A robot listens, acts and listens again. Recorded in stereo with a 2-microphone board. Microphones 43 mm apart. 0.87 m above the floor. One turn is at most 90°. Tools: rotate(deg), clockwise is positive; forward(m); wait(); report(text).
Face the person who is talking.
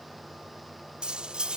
wait()
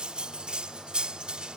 wait()
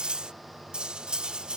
report("I can't make out anyone speaking to turn to.")